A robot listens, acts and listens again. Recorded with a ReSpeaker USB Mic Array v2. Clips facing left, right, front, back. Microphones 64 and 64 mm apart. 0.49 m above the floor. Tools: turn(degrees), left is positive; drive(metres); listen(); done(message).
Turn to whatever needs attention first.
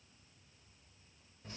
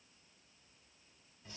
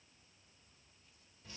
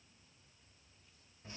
listen()
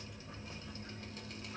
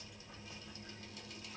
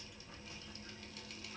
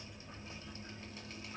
listen()
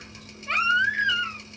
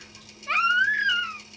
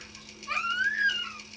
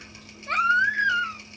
turn(degrees=170)
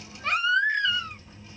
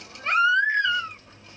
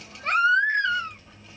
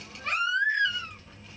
turn(degrees=-35)
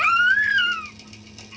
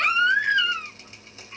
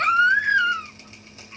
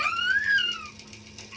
done("Facing the baby crying, 1 to 2 m away.")